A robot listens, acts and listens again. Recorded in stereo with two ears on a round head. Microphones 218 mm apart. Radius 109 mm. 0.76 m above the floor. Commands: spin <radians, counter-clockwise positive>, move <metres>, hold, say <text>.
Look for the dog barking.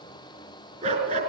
spin -0.52
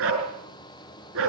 spin -2.09
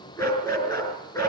spin 0.26
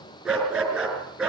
say Facing the dog barking, over 4 m away.